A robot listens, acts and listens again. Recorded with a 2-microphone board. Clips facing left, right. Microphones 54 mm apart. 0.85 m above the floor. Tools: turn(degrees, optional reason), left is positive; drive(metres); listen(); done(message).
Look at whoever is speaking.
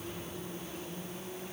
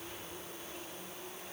listen()
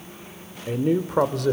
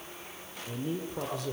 turn(degrees=75, reason="The man speaking: about 75° left or 105° left.")
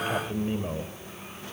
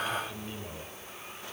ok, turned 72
turn(degrees=35, reason="So it is at 35° left.")
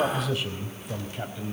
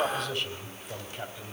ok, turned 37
done("Found it: a man speaking, straight ahead.")